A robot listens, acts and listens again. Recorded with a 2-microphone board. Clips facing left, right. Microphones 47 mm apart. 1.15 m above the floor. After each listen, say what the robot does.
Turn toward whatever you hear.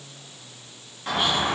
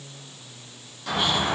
Turn 30° left.
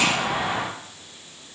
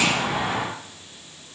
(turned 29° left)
Turn 10° left.
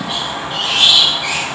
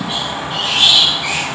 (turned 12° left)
Facing the squeak.